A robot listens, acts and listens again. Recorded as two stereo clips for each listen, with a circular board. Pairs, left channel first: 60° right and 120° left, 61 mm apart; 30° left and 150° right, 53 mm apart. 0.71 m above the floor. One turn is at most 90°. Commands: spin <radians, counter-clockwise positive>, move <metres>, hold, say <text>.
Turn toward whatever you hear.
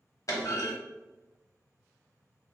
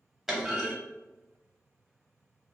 spin -1.22
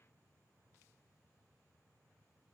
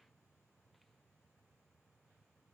say I heard a clunk from this way, but can't make it out now.